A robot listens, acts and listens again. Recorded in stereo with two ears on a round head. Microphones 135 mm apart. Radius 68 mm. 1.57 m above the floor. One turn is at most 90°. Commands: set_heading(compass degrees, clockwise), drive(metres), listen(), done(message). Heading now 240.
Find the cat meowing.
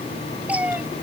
set_heading(270)
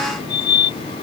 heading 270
listen()
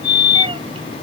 listen()
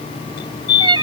set_heading(0)
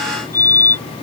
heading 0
set_heading(60)
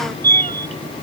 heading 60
listen()
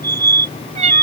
set_heading(105)
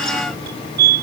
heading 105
listen()
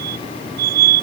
listen()
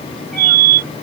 done("Facing where the cat meowing came from. I can't hear it now.")